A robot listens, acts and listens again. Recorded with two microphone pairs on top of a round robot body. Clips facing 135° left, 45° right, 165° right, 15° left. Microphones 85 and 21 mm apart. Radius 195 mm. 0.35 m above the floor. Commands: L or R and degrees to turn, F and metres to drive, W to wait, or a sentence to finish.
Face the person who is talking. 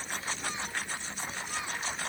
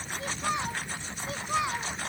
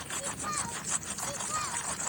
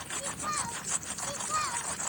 R60
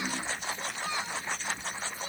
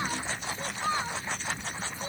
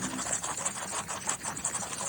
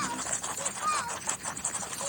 L10
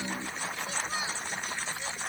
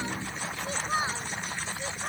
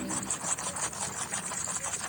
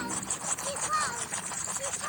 Found it: a child speaking, straight ahead.